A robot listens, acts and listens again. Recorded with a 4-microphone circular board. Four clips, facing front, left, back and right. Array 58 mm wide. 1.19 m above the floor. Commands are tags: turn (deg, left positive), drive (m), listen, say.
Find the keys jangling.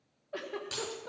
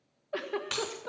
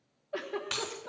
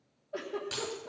<turn deg="130"/>
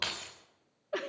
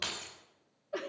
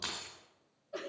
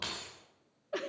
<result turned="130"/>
<say>Facing the keys jangling, 2 to 4 m away.</say>